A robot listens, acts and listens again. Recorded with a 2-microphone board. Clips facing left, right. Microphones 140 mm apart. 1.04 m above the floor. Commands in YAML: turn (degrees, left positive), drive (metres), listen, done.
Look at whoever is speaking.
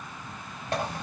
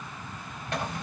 listen: true
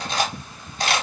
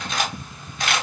listen: true
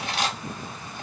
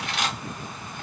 done: "I can't make out anyone speaking, only cutlery clinking."